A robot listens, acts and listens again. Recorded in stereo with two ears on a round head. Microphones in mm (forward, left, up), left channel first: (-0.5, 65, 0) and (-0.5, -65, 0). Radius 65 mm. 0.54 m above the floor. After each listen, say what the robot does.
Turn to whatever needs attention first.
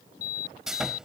Turn 65° left.
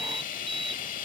Keep listening.
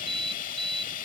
Found it: an alarm, straight ahead.